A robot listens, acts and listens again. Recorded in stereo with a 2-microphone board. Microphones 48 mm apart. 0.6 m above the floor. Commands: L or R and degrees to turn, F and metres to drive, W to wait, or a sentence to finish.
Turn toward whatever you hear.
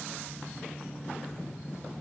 W
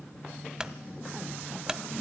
R30
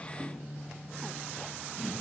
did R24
W
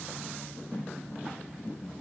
I heard a clunk, but can't make it out now. It was about 10° left or 145° right.